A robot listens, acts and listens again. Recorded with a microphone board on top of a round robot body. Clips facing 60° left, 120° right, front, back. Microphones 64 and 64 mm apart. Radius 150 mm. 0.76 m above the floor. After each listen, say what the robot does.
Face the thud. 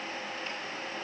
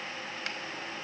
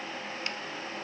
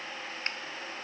Keep listening.
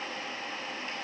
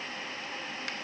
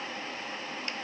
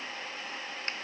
Keep listening.
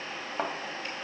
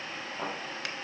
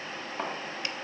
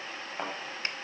Turn 100° left.
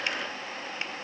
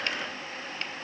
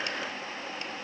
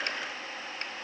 Facing where the thud came from. I can't hear it now.